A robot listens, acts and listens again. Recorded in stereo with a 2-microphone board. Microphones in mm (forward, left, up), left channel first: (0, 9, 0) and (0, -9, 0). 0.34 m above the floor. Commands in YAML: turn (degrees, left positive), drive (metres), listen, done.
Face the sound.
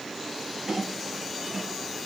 turn: -35
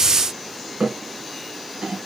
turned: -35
turn: -105
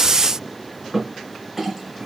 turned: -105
turn: -10
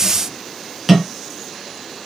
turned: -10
done: "Found it: a clink, straight ahead, 2 to 4 m away."